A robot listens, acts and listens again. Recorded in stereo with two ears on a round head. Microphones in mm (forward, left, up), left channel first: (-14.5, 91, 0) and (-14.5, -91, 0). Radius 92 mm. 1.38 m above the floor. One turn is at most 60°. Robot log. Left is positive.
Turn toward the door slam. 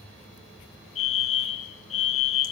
cmd idle
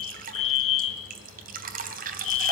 cmd idle
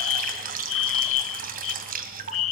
end: I can't make out a door slam, only dripping and a fire alarm.